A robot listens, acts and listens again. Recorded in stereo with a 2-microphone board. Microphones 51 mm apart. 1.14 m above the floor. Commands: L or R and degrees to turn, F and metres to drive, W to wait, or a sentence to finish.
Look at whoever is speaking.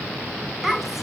R30
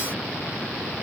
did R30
W
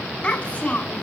L25
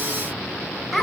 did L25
Found it: a child speaking, straight ahead, over 4 m away.